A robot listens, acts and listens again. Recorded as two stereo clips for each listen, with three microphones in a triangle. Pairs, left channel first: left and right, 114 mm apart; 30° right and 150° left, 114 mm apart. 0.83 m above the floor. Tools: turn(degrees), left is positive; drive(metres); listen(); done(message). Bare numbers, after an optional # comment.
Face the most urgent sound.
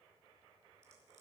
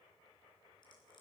listen()
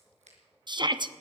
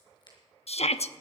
# The shout: 40° right.
turn(-40)
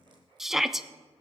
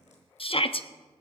done("Found it: a shout, straight ahead, under 1 m away.")